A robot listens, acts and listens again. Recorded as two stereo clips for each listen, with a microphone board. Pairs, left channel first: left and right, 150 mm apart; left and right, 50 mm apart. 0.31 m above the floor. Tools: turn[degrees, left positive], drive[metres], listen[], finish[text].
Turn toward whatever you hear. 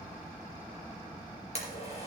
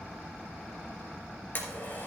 Thought: The blender: about 45° left or 135° left.
Action: turn[45]
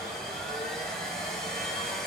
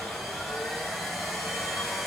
Action: finish[Found it: a blender, straight ahead, 2 to 4 m away.]